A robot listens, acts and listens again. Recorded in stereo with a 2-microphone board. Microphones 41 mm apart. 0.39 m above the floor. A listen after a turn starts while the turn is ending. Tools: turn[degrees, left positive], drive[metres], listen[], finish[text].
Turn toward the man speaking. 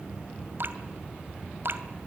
Action: listen[]
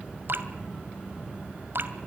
Action: listen[]
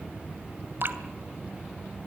Action: finish[I can't make out a man speaking to turn to.]